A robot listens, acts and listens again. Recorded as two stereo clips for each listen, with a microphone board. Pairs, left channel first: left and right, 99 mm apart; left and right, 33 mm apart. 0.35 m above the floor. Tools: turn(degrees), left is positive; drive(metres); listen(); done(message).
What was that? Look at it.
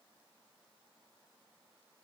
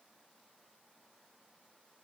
listen()
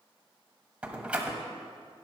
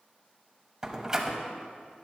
turn(degrees=-30)
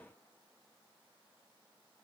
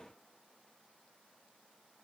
listen()
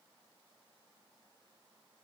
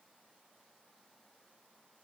done("I heard a door slam, but can't make it out now. It was about 15° left or 135° right.")